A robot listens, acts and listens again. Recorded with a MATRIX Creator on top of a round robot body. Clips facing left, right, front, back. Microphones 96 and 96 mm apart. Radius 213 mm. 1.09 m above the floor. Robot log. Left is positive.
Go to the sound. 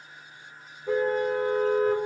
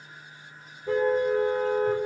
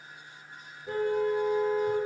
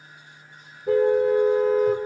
note: The car horn: 175° left.
cmd yaw +175
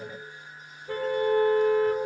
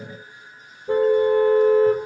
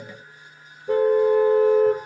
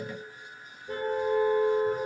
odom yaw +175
note: The car horn is now 20° right.
cmd yaw -20
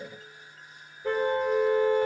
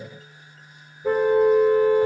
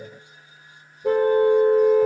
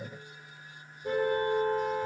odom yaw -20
cmd fwd 1.0
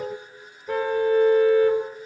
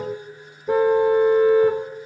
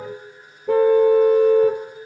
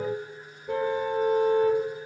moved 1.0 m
note: The car horn is now 15° right.
cmd yaw -15
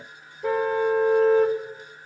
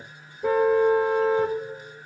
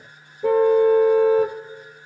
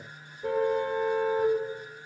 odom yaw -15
cmd fwd 1.0
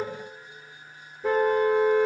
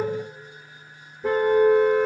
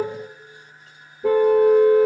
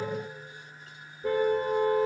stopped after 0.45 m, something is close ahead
end: I am next to the car horn.